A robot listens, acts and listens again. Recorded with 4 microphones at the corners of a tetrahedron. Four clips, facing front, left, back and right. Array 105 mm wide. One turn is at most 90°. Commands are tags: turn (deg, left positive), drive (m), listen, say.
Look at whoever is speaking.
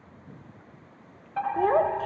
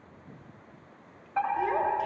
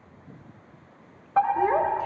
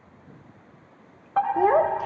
<turn deg="-65"/>
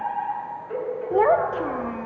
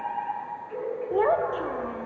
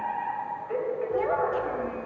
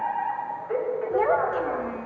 <say>Facing the child speaking, under 1 m away.</say>